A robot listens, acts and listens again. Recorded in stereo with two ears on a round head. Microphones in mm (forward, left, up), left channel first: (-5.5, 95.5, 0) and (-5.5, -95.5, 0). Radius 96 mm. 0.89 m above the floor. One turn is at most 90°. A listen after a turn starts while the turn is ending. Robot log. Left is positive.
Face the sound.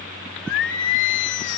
note: The singing: about 60° left or 120° left.
cmd yaw +60
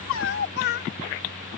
note: So it is at 55° left.
cmd yaw +55
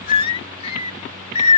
note: The singing is now 35° left.
cmd yaw +35
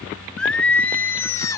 note: The singing is now 15° left.
cmd yaw +15
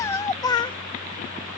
note: The singing is now 20° left.
cmd yaw +20
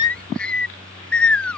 end: Found it: singing, straight ahead.